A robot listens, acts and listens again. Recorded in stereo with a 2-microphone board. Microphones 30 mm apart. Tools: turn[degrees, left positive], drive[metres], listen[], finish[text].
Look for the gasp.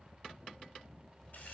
Action: listen[]
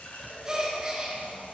Thought: The gasp: about 25° right or 155° right.
Action: turn[-25]
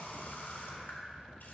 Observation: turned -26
Action: listen[]
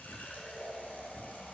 Action: finish[I heard a gasp, but can't make it out now. It was about 5° left or 130° right.]